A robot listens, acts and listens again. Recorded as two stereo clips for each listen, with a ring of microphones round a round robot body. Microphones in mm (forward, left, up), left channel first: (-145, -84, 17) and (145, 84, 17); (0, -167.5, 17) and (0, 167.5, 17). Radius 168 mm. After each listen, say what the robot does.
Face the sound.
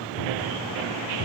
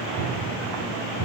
Turn 145° right.
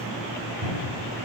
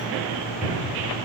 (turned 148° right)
Facing the cupboard door, 2 to 4 m away.